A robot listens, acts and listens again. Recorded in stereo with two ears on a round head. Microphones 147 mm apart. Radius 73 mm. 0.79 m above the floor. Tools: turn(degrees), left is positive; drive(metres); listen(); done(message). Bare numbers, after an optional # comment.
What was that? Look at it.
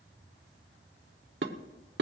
# The dishes clattering: about 70° right or 110° right.
turn(-70)
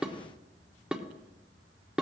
done("Facing the dishes clattering.")